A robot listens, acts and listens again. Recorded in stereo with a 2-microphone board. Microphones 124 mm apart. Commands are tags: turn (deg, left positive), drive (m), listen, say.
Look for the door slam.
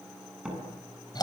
<turn deg="-30"/>
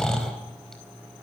<listen/>
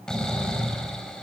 <say>I heard a door slam, but can't make it out now. It was about 25° left or 145° right.</say>